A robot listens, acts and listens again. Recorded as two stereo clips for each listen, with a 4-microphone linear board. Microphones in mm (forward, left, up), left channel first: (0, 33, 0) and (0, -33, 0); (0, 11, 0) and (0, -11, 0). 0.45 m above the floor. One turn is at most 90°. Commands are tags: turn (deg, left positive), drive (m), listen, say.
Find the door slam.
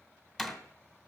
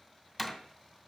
<turn deg="30"/>
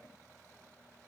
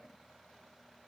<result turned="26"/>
<listen/>
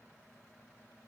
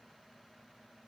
<say>I heard a door slam, but can't make it out now. It was about 20° right or 150° left.</say>